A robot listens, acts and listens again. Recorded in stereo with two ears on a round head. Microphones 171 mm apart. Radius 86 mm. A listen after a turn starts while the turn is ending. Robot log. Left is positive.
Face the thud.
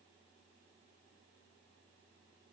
cmd idle
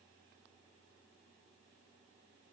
cmd idle
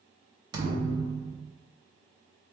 note: The thud: about 25° right or 155° right.
cmd yaw -25
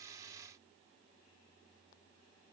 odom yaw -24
cmd idle
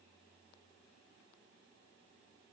end: I heard a thud, but can't make it out now. It was about straight ahead or 135° right.